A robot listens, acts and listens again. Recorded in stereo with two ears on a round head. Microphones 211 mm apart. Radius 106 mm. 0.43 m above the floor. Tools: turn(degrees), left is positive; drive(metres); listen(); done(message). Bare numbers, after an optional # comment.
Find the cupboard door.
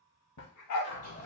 # The cupboard door: about 50° left or 130° left.
turn(50)
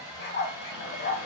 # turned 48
listen()
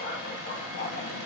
# So it is at 75° left.
turn(75)
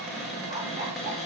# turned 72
done("Facing the cupboard door.")